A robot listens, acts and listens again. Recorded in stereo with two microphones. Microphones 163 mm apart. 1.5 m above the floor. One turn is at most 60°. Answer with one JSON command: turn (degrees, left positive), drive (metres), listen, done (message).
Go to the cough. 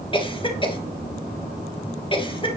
{"turn": 30}
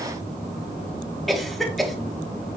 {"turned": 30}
{"drive": 1.0}
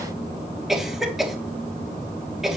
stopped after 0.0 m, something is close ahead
{"done": "Something is in my way. I am facing the cough but have not reached it."}